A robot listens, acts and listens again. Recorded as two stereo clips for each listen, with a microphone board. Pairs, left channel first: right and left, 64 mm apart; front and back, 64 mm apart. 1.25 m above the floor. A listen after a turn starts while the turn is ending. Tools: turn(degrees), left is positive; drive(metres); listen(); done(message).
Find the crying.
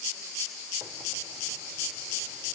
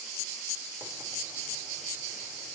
listen()
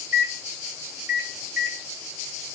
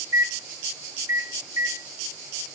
listen()
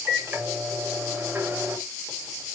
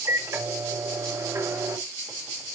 done("I can't make out crying to turn to.")